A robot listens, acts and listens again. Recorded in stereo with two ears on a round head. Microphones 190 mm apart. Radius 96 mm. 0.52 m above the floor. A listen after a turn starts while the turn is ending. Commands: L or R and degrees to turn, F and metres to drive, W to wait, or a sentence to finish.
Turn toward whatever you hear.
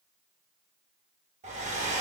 R30
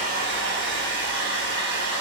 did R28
R115
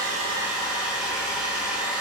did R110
Facing the hair dryer.